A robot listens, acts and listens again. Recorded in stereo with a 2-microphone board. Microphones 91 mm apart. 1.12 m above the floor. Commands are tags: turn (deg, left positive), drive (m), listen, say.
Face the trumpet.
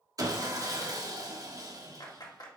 <listen/>
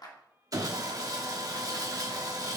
<listen/>
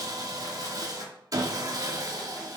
<say>I can't make out a trumpet to turn to.</say>